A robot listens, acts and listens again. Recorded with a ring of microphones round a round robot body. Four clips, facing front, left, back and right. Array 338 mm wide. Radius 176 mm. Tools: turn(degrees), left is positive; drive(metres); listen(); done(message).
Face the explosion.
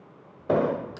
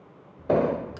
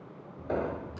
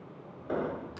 turn(degrees=50)
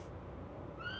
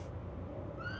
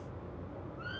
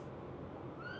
done("Facing where the explosion came from. I can't hear it now.")